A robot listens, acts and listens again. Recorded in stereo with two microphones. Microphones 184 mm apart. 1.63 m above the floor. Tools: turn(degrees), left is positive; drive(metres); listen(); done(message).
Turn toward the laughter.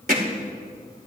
listen()
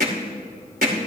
listen()
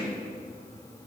done("I can't make out laughter to turn to.")